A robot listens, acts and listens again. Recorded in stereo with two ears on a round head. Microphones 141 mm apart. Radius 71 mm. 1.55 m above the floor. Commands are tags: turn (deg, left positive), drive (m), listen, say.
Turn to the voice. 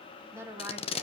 <turn deg="-15"/>
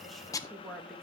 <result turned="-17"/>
<say>Found it: a woman speaking, straight ahead.</say>